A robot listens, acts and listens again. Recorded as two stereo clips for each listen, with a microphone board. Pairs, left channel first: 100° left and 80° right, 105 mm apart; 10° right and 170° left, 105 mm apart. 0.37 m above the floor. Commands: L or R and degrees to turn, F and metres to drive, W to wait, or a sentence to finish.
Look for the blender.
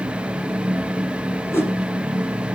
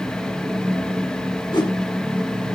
W
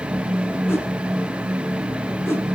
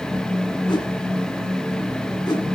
W
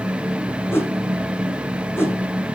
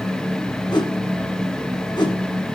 I can't make out a blender, only a whoosh.